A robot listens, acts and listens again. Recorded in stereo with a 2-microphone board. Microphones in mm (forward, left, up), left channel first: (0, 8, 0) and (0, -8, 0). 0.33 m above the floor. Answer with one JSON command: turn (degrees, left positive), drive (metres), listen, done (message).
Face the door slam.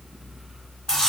{"listen": true}
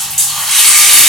{"listen": true}
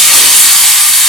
{"done": "I can't make out a door slam to turn to."}